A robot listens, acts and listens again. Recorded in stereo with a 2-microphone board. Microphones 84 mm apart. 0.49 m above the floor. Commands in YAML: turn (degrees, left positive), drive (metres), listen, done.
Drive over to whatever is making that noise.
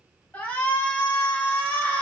turn: 20
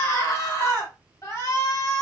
turn: 140
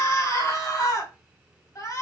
turn: 45
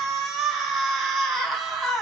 drive: 1.0
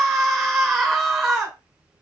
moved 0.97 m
drive: 1.0
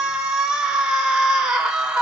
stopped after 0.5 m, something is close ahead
turn: -10
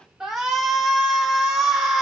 done: "I am next to the shout."